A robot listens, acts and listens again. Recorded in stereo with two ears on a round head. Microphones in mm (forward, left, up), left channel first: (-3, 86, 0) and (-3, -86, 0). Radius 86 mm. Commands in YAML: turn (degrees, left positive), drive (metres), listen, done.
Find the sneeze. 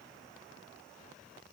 listen: true
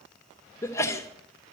turn: 30
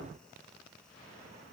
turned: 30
listen: true
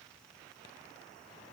done: "I heard a sneeze, but can't make it out now. It was about 15° right or 135° left."